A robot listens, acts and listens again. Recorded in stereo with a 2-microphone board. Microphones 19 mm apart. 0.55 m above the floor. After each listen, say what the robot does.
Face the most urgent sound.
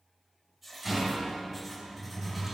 Keep listening.
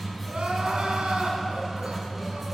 Turn 90° right.
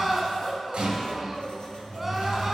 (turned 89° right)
Turn 10° right.
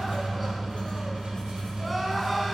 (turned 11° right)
Found it: crying, straight ahead, 1 to 2 m away.